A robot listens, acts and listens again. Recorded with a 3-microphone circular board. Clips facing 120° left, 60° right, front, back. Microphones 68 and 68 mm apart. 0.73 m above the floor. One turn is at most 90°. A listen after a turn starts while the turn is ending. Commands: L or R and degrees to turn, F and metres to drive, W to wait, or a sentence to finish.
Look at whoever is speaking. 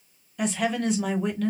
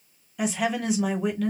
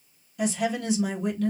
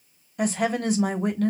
R90
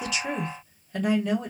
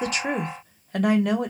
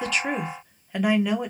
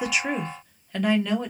R75
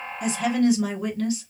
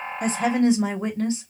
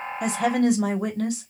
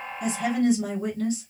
Facing the woman speaking.